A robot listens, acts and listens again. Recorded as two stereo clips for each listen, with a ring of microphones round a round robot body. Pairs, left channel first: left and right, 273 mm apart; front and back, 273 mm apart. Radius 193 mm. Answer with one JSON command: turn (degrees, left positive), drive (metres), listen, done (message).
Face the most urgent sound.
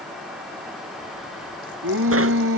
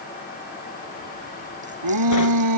{"turn": -150}
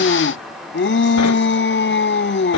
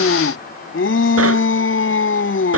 {"turn": 40}
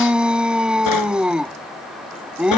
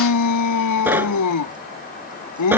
{"done": "Facing the shout."}